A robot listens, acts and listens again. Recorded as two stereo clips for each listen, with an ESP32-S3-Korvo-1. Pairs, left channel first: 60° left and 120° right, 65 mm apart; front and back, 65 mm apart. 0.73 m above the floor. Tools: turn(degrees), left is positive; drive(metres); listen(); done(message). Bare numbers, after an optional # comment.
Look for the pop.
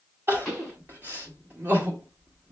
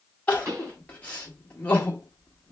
# The pop: 140° left.
turn(140)
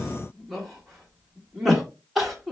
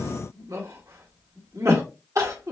done("Facing where the pop came from. I can't hear it now.")